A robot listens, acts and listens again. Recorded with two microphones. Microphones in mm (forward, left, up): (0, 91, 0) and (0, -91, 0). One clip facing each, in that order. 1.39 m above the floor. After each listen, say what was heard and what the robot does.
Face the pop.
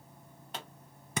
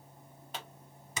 Turn 30° left.
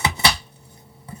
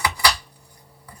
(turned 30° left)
Keep listening.
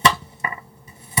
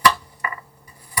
I heard a pop, but can't make it out now. It was about 30° right or 150° left.